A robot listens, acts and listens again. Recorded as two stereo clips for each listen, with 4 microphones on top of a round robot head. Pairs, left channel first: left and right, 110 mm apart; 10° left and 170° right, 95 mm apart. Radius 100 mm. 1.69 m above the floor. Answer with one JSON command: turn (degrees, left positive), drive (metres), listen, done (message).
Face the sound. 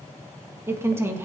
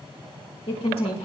{"turn": -25}
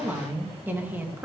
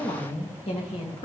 {"turn": -20}
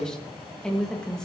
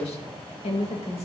{"done": "Facing the woman speaking."}